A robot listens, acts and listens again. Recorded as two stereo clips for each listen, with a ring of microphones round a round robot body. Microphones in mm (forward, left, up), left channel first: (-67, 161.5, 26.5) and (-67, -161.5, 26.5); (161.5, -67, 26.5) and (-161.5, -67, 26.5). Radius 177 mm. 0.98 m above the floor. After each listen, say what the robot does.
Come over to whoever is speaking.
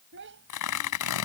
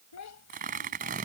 Turn 30° right.
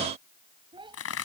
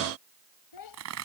Turn 15° right.
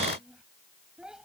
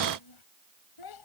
Drive 1.0 m forward.
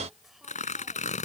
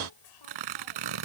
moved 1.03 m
Drive 1.0 m forward.
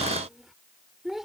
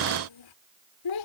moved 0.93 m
Drive 1.0 m forward.
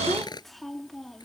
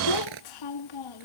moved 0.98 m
Drive 1.0 m forward.
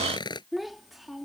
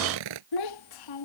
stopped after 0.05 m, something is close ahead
I am next to the child speaking.